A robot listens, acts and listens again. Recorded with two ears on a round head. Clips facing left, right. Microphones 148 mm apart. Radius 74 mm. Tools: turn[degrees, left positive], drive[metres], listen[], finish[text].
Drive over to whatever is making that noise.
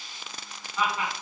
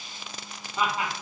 Thought: The laughter: about 25° right or 155° right.
Action: turn[-25]
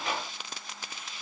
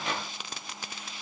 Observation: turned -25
Action: listen[]
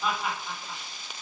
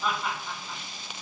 Action: drive[1.0]
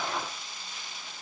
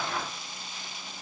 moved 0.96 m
Action: listen[]
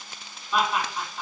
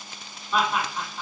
Action: drive[1.0]
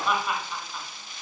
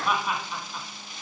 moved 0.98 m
Thought: The laughter is now 10° right.
Action: turn[-10]
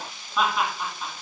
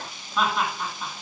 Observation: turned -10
Action: drive[1.0]
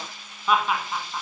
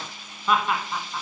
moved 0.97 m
Action: drive[1.0]
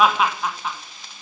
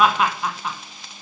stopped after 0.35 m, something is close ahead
Thought: The laughter is now 10° right.
Action: turn[-10]
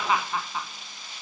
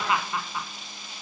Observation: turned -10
Action: finish[I am next to the laughter.]